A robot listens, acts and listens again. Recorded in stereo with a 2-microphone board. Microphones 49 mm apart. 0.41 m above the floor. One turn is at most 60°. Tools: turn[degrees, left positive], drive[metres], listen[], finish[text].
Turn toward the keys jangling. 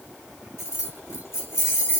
Thought: The keys jangling: about 70° left or 110° left.
Action: turn[60]
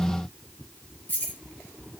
Thought: So it is at 40° left.
Action: turn[40]
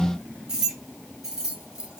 Thought: The keys jangling is now 15° right.
Action: turn[-15]
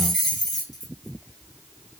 Action: finish[Found it: keys jangling, straight ahead.]